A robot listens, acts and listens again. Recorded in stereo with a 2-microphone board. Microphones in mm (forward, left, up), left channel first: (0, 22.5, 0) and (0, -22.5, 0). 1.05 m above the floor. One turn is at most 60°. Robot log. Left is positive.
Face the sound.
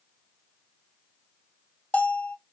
note: The bell: about 35° left or 145° left.
cmd yaw +35
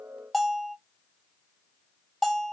end: Facing the bell, 1 to 2 m away.